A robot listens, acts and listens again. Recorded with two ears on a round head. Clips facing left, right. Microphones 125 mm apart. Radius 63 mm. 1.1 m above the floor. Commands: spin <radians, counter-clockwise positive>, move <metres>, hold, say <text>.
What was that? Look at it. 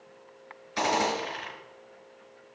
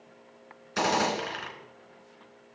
spin -0.96
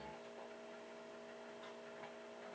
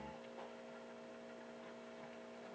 hold
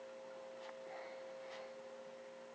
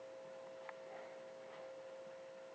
say I heard a gunshot, but can't make it out now. It was about straight ahead or 70° right.